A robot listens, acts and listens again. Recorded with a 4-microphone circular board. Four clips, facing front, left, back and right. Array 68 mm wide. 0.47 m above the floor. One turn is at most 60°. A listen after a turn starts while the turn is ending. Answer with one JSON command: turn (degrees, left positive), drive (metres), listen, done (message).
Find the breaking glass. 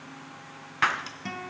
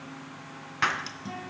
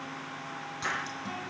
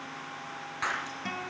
{"turn": 20}
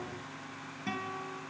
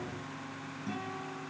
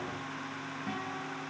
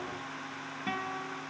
{"done": "I heard breaking glass from this way, but can't make it out now."}